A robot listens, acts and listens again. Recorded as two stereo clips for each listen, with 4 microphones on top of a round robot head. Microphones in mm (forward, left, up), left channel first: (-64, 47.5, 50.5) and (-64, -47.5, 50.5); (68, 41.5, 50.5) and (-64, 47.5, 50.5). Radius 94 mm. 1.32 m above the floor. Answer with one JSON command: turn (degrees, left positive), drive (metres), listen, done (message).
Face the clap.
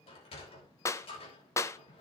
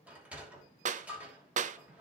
{"turn": 150}
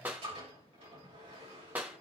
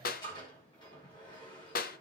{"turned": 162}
{"turn": -10}
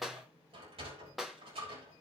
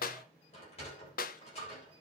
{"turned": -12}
{"done": "Found it: a clap, straight ahead."}